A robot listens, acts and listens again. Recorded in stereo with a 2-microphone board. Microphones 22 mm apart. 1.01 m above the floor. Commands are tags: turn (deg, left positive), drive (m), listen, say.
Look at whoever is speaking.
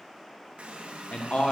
<turn deg="55"/>
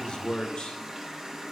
<turn deg="55"/>
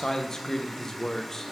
<turn deg="25"/>
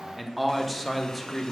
<say>Found it: a man speaking, straight ahead.</say>